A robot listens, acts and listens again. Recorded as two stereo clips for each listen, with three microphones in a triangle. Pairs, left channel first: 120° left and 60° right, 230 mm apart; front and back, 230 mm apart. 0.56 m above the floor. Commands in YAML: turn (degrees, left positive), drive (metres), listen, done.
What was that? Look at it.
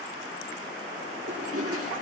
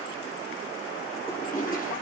turn: -55
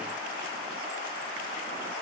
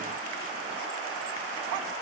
listen: true
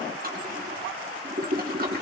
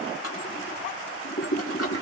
turn: -10
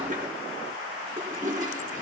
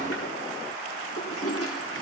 done: "Facing the toilet flushing, 2 to 4 m away."